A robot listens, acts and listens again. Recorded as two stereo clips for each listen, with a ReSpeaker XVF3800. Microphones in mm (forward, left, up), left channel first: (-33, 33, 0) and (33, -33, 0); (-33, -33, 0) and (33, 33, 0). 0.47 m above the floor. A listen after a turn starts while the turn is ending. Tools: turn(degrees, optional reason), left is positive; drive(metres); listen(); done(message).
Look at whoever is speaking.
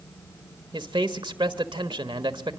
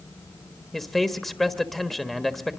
turn(degrees=-50, reason="The man speaking: 50° right.")
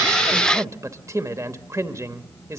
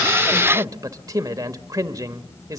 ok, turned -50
done("Facing the man speaking, 1 to 2 m away.")